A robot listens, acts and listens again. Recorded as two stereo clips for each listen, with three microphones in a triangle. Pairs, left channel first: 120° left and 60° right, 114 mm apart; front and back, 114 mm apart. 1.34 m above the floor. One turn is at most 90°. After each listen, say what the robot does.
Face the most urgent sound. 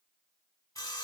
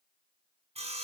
Keep listening.
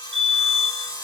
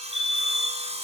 Turn 90° right.
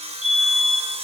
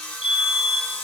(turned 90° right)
Turn 20° left.
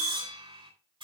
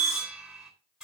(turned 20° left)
Facing the fire alarm, 2 to 4 m away.